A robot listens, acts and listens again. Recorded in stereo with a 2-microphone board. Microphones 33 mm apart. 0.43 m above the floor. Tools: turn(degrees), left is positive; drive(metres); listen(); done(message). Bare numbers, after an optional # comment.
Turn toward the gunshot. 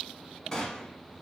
# The gunshot: about 25° left or 155° left.
turn(25)
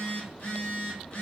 listen()
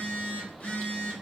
done("I heard a gunshot, but can't make it out now. It was about straight ahead or 130° left.")